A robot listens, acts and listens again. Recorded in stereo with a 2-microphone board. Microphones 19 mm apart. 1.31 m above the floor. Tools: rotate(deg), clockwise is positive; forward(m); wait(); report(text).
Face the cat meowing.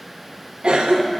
wait()
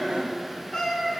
rotate(-45)
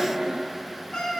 rotate(-85)
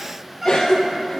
rotate(20)
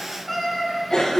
report("Facing the cat meowing.")